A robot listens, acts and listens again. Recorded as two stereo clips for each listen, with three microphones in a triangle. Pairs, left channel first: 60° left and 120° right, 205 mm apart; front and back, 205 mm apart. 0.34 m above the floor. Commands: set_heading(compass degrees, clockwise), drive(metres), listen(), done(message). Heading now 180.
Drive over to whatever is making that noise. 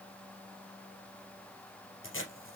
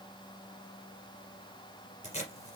set_heading(120)
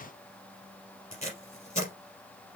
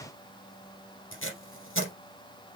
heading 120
drive(1.0)
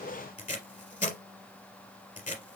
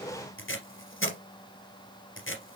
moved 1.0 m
set_heading(110)
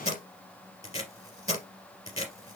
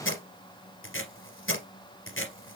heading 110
drive(1.0)
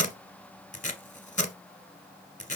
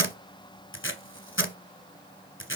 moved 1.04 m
drive(1.0)
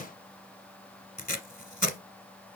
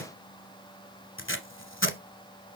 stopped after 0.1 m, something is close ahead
set_heading(100)
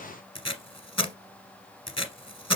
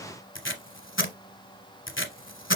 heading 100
done("I am next to the tape being pulled.")